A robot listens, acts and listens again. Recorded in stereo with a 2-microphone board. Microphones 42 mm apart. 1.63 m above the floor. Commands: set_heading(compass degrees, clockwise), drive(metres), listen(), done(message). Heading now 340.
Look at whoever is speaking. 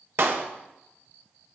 listen()
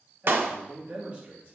set_heading(5)
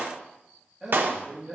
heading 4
done("Facing the man speaking, 2 to 4 m away.")